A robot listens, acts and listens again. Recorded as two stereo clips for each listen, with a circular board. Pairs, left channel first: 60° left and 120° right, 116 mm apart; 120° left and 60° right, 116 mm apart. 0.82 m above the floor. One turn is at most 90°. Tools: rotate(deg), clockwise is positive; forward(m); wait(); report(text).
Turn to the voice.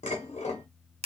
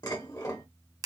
wait()
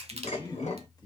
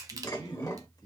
rotate(-90)
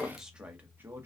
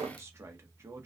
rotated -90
rotate(85)
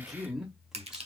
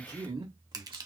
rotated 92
rotate(35)
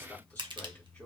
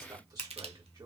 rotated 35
rotate(10)
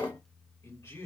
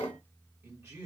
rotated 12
report("Facing the man speaking, 1 to 2 m away.")